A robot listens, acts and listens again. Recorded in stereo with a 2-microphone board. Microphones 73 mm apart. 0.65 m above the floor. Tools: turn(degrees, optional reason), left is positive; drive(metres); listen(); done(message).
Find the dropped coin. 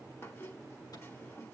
listen()
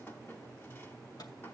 listen()
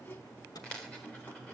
turn(degrees=30)
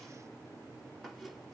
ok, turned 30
listen()
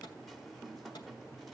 done("I heard a dropped coin, but can't make it out now. It was about 15° right or 135° left.")